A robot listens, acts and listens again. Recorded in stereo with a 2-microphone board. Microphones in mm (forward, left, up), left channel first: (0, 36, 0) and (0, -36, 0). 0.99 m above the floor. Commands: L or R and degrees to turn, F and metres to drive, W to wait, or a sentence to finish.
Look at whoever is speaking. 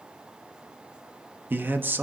R30
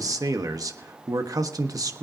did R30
R120
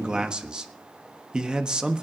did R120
R10
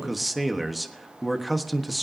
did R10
Facing the man speaking, 1 to 2 m away.